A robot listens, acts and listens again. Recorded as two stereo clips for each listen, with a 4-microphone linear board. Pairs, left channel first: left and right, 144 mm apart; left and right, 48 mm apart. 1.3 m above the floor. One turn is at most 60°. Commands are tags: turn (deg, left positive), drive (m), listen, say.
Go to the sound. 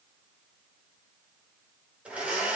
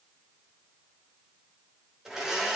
<turn deg="-30"/>
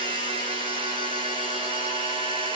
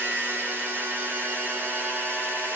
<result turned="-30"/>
<turn deg="-60"/>
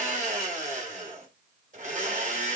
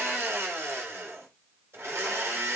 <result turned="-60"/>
<turn deg="-60"/>
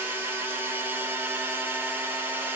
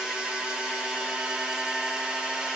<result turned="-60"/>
<turn deg="-15"/>
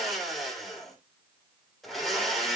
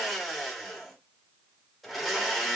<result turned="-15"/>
<drive m="1.0"/>
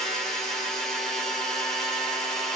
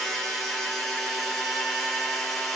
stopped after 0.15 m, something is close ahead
<say>Blocked. The blender is further on, straight ahead.</say>